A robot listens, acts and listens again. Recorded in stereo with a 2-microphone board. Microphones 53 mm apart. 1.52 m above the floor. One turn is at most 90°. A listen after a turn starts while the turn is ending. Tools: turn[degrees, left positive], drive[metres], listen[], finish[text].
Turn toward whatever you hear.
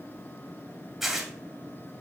Action: turn[-30]
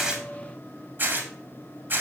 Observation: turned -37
Thought: So it is at 140° right.
Action: turn[-90]
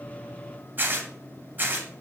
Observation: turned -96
Thought: The tearing paper is now 40° right.
Action: turn[-40]
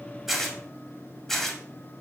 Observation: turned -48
Action: finish[Found it: tearing paper, straight ahead, 2 to 4 m away.]